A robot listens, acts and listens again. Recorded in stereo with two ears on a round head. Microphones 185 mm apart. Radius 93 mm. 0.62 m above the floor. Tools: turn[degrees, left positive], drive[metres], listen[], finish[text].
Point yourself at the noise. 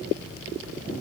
Action: listen[]
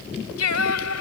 Action: turn[90]
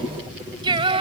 Thought: So it is at 30° right.
Action: turn[-30]
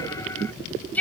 Action: finish[Facing the singing.]